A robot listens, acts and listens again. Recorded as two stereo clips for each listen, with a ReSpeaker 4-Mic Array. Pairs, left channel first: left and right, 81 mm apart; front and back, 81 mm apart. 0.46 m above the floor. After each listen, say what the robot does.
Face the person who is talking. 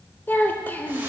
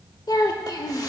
Turn 25° left.
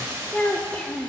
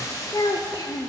Turn 15° left.
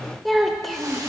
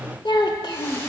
Facing the child speaking.